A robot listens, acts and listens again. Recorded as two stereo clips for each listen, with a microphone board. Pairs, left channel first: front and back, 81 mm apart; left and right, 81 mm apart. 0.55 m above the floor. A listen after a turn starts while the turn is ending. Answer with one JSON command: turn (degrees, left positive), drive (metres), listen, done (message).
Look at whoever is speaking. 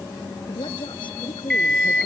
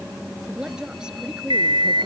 {"turn": -10}
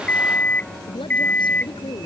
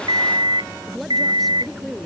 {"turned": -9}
{"done": "Facing the woman speaking."}